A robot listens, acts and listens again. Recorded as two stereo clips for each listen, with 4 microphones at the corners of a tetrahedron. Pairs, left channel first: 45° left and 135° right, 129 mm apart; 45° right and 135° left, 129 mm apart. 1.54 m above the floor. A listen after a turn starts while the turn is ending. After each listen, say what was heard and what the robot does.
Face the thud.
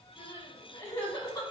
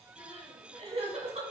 Keep listening.
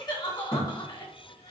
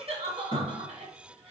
Facing the thud, 2 to 4 m away.